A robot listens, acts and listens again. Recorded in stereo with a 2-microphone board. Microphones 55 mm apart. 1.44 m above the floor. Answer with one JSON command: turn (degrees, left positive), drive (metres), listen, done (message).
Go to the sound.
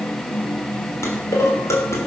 {"turn": 65}
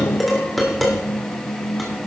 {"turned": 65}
{"drive": 1.0}
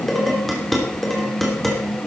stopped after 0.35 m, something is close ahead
{"done": "Something is in my way. I am facing the dishes clattering but have not reached it."}